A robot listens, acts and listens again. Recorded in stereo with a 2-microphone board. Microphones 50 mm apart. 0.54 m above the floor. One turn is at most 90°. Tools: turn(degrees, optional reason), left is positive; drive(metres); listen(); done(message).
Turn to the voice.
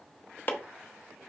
listen()
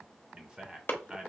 turn(degrees=-20, reason="The man speaking: about 20° right or 160° right.")
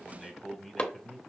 done("Facing the man speaking, 1 to 2 m away.")